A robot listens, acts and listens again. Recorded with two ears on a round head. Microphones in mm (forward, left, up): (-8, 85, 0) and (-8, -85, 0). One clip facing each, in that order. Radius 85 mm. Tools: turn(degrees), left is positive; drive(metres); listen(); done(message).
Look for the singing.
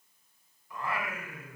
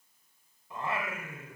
turn(degrees=-20)
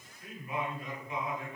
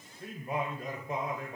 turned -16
turn(degrees=-145)
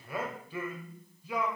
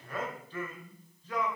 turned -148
turn(degrees=10)
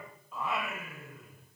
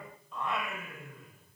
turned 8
done("Found it: singing, straight ahead.")